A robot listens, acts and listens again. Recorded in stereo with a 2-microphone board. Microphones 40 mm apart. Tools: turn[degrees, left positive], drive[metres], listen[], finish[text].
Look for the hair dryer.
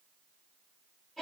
Action: listen[]
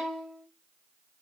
Action: listen[]
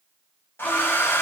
Action: turn[90]
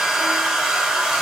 Thought: So it is at 10° right.
Action: turn[-10]
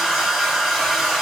Action: finish[Facing the hair dryer, 1 to 2 m away.]